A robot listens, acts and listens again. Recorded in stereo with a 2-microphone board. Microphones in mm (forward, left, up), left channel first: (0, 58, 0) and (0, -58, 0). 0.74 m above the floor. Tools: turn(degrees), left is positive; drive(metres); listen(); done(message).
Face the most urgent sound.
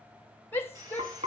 turn(degrees=20)
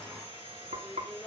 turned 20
done("Facing the shout.")